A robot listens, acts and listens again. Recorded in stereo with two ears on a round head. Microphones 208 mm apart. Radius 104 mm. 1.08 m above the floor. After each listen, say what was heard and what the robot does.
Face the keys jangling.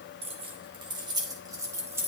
Turn 30° right.
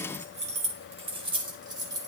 The keys jangling: about 15° right or 165° right. Turn 15° right.
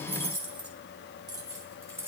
Turn 30° right.
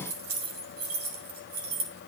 So it is at 140° right. Turn 140° right.
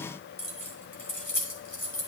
The keys jangling is now 10° left. Turn 10° left.
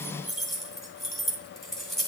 Found it: keys jangling, straight ahead.